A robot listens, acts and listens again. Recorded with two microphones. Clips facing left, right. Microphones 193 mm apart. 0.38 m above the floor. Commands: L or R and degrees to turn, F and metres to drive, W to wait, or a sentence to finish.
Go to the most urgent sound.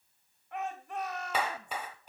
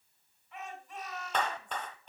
L65
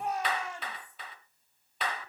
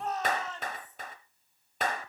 L15
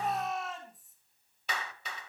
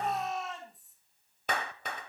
F1.0
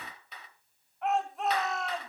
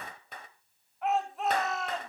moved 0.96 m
F1.0
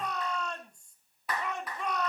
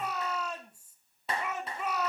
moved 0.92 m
R10
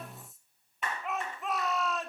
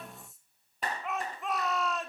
F1.0
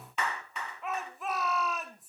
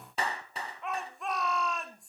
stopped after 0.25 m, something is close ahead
Arrived at the shout, straight ahead.